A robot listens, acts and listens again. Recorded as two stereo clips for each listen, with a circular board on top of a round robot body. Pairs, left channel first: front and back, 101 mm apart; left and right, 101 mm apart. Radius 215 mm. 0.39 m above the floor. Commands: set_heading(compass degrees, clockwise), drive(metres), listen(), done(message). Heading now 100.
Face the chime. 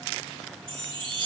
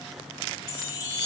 set_heading(315)
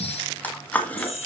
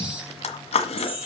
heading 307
set_heading(317)
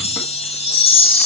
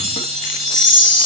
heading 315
done("Facing the chime, over 4 m away.")